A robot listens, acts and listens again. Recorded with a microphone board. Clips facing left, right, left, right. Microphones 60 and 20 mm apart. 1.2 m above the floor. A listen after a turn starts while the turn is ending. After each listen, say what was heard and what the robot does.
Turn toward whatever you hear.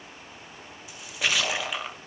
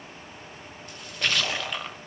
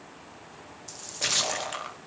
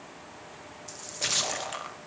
Turn 30° left.
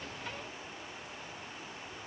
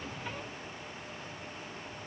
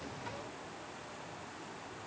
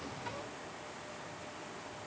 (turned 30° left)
Keep listening.
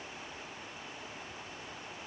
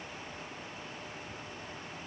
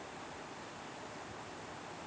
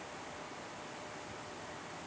I heard a splash, but can't make it out now. It was about 25° right or 145° left.